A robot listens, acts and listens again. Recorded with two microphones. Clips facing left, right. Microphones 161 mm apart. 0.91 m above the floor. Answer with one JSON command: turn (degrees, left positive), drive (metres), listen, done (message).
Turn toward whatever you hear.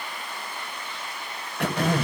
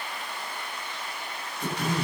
{"turn": 70}
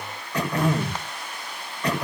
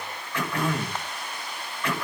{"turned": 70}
{"turn": 35}
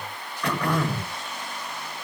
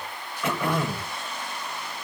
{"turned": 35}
{"done": "Found it: throat clearing, straight ahead, over 4 m away."}